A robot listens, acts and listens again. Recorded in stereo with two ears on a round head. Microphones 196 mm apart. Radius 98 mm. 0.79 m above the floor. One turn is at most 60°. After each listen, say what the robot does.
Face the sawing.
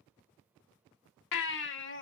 Keep listening.
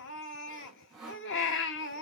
Turn 30° right.
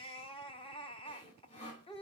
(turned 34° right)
Turn 30° left.
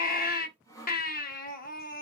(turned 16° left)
Turn 15° left.
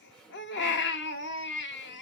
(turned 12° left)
Facing the sawing.